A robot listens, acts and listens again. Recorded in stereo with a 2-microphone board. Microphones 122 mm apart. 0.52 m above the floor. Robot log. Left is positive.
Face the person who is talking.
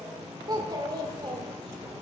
note: The child speaking: about 35° right or 145° right.
cmd yaw -35
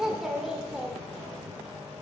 end: Found it: a child speaking, straight ahead.